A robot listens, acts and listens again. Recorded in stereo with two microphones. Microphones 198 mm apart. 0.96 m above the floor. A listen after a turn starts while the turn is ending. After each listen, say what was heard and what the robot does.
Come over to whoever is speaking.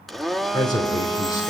The man speaking: about 20° left or 160° left. Turn 20° left.
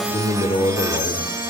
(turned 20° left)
So it is at 145° left. Turn 145° left.
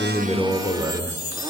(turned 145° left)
Drive 1.0 m forward.
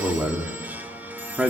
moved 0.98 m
Drive 1.0 m forward.
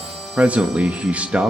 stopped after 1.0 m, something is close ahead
I am next to the man speaking.